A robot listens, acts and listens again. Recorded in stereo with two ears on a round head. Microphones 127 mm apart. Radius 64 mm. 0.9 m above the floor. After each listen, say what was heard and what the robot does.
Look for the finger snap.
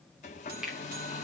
Turn 30° right.
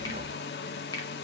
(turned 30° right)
So it is at 25° left. Turn 25° left.
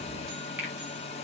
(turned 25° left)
The finger snap is now 10° right. Turn 10° right.
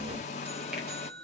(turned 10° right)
Keep listening.
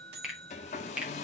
Facing the finger snap.